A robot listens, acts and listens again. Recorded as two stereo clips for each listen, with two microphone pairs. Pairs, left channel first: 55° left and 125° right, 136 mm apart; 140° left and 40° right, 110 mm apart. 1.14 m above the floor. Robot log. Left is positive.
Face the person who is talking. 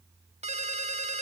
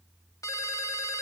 cmd idle
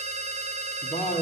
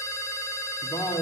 note: The man speaking: 95° left.
cmd yaw +95
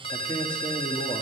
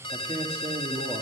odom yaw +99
end: Facing the man speaking, 2 to 4 m away.